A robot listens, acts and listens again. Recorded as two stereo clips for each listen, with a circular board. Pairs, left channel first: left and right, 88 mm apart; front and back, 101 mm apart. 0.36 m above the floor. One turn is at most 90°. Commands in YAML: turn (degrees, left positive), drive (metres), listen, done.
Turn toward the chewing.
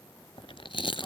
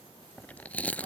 turn: 75
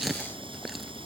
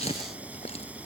done: "Found it: chewing, straight ahead."